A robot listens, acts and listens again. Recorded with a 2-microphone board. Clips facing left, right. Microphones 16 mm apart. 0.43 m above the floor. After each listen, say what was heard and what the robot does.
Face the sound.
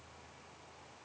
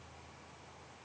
Keep listening.
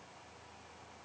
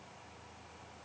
Keep listening.
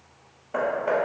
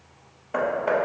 The hammering: about 30° right or 150° right. Turn 30° right.
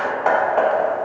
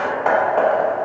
Facing the hammering, under 1 m away.